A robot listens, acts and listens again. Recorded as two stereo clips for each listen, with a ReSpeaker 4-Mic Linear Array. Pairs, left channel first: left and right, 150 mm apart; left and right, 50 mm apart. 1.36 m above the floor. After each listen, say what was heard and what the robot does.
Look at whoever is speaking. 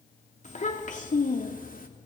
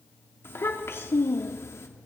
The child speaking: about 65° left or 115° left. Turn 65° left.
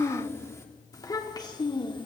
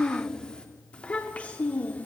So it is at 30° left. Turn 30° left.
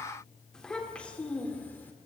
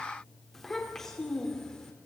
The child speaking is now 10° left. Turn 10° left.
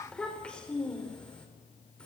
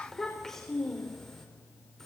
Facing the child speaking, 2 to 4 m away.